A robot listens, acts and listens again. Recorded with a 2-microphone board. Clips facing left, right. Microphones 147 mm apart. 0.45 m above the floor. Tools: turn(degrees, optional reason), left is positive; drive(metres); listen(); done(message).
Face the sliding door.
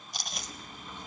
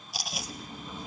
turn(degrees=-30)
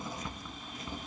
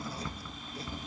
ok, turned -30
turn(degrees=20, reason="So it is at 20° left.")
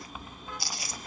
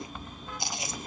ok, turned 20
done("Found it: a sliding door, straight ahead, under 1 m away.")